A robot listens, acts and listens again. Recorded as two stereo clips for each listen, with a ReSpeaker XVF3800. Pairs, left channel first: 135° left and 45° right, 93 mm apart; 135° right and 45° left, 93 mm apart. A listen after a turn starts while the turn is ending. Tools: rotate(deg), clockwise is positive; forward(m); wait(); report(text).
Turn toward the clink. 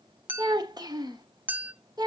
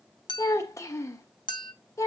rotate(110)
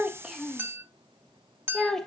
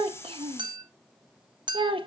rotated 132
rotate(-20)
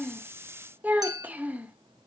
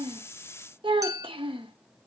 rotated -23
report("Found it: a clink, straight ahead, under 1 m away.")